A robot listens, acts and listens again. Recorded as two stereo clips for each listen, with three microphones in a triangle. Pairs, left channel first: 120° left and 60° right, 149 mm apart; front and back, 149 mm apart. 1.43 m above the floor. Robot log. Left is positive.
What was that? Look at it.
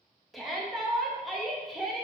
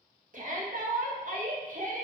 note: The shout: 150° right.
cmd yaw -150
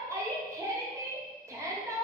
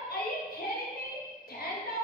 note: The shout is now 10° left.
cmd yaw +10
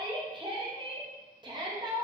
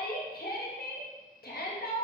end: Found it: a shout, straight ahead, under 1 m away.